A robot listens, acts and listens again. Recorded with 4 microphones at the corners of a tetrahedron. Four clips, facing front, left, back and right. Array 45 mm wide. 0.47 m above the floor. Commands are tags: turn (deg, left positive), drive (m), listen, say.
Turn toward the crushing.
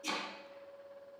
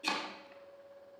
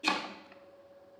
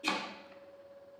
<listen/>
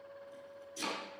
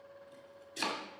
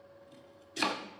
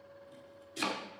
<listen/>
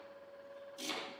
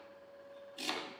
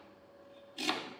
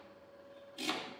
<say>I can't make out crushing, only chopping.</say>